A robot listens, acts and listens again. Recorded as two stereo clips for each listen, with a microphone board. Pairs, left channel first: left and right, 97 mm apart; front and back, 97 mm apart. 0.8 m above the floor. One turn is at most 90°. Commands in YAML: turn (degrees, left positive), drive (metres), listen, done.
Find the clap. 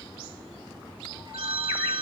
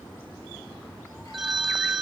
listen: true
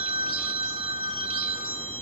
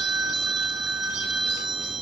listen: true
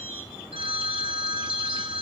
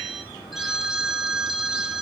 done: "I can't make out a clap, only a phone ringing."